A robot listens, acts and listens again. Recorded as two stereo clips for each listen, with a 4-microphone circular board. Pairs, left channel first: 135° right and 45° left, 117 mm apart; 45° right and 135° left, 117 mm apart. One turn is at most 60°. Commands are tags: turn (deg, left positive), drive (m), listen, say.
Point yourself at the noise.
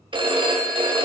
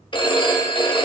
<say>Facing the phone ringing.</say>